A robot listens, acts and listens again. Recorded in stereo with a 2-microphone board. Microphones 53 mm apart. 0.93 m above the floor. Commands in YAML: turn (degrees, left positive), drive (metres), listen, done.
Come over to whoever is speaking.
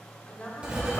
turn: 20
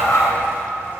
listen: true
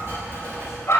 listen: true
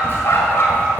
done: "I heard a woman speaking, but can't make it out now. It was about straight ahead or 140° left. I did not reach it."